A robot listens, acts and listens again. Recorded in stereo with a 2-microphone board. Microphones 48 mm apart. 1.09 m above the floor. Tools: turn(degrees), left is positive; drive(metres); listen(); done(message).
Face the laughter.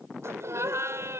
turn(degrees=-65)
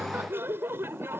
turn(degrees=-55)
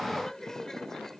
turn(degrees=10)
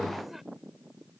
listen()
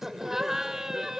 turn(degrees=-10)
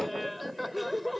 done("Facing the laughter.")